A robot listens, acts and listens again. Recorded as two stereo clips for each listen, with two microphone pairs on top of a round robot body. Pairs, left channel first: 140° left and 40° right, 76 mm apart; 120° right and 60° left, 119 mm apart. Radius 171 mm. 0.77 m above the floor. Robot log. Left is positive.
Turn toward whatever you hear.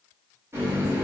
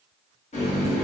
note: The running tap: 95° right.
cmd yaw -95
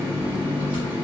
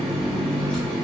note: The running tap is now 40° right.
cmd yaw -40
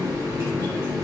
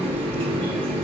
note: The running tap is now 15° left.
cmd yaw +15
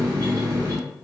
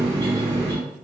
end: Facing the running tap, 1 to 2 m away.